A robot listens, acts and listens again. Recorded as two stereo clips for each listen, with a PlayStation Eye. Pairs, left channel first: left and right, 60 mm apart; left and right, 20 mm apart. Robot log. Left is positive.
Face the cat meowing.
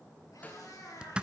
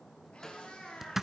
note: The cat meowing: about 75° left or 105° left.
cmd yaw +75
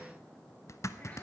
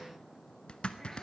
cmd idle
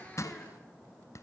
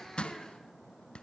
cmd idle
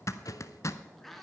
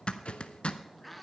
end: Facing the cat meowing.